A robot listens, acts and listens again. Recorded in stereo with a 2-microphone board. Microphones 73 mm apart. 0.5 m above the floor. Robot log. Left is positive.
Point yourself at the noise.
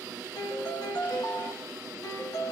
note: The piano: about 65° left or 115° left.
cmd yaw +65
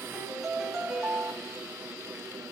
end: Found it: a piano, straight ahead, 1 to 2 m away.